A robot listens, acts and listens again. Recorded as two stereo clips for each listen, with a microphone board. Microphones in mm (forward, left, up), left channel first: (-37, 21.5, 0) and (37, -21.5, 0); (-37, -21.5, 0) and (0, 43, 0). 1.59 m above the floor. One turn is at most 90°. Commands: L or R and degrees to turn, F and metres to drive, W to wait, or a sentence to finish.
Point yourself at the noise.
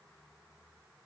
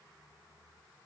W
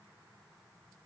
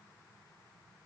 W
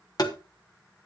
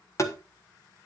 R90
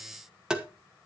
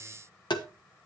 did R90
R90
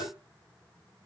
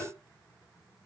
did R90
R20
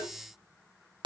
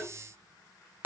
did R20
Found it: tapping, straight ahead, 1 to 2 m away.